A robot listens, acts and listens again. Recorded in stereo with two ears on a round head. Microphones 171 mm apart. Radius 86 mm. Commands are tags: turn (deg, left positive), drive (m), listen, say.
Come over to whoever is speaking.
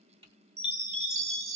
<listen/>
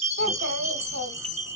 <turn deg="-65"/>
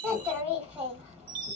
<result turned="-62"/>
<turn deg="-10"/>
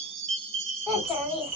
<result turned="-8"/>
<drive m="1.0"/>
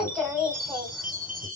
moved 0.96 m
<drive m="1.0"/>
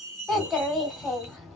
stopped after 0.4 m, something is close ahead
<say>I am next to the child speaking.</say>